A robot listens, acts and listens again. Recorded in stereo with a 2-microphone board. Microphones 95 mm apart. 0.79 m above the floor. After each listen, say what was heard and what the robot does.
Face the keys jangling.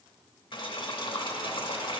Keep listening.
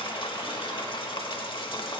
Keep listening.
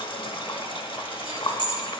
The keys jangling: about 55° left or 125° left. Turn 55° left.
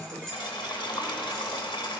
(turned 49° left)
Keep listening.
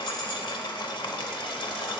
Keep listening.
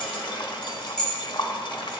Found it: keys jangling, straight ahead.